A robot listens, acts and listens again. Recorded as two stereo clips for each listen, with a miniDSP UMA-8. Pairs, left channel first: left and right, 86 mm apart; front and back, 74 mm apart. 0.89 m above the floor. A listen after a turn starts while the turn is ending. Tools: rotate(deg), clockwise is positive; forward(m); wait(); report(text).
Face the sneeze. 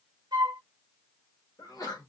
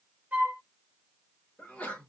rotate(-70)
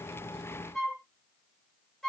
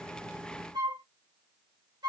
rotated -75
report("I heard a sneeze from this way, but can't make it out now.")